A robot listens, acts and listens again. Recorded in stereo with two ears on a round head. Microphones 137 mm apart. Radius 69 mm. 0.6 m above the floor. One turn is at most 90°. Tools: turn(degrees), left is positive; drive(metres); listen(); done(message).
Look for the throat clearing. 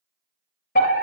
listen()
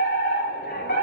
listen()
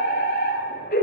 done("I can't make out throat clearing to turn to.")